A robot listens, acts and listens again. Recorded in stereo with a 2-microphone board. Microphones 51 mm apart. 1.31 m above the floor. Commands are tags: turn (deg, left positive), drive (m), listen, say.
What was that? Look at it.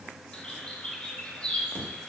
<turn deg="20"/>
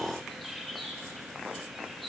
<say>Found it: a bird, straight ahead.</say>